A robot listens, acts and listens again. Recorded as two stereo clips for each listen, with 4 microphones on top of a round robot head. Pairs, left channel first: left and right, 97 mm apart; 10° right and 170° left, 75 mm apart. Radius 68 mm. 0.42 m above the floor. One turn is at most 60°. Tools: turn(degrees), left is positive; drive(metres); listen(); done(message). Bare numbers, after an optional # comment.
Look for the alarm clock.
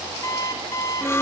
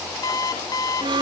# The alarm clock: 25° left.
turn(25)
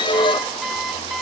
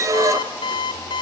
done("Found it: an alarm clock, straight ahead.")